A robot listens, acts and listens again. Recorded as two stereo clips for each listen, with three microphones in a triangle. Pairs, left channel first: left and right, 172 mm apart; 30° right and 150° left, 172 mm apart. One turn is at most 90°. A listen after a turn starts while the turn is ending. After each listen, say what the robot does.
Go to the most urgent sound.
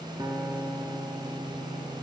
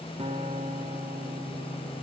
Keep listening.
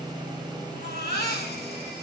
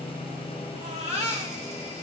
Turn 90° left.
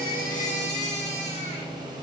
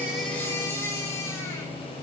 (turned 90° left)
Turn 45° left.
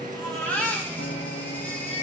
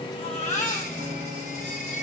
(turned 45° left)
Turn 10° left.
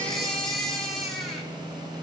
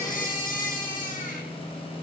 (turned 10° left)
Drive 1.0 m forward.
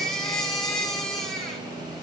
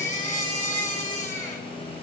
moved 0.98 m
Drive 1.0 m forward.
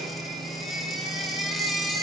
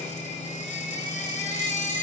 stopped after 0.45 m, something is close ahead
Arrived at the baby crying, straight ahead.